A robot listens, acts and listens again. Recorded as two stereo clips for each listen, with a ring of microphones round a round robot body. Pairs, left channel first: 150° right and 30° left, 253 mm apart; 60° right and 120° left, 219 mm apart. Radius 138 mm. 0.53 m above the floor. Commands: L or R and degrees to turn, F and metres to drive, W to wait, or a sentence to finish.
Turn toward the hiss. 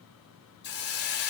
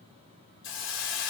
R100
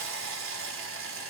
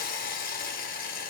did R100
R10
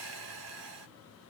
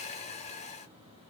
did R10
Facing the hiss.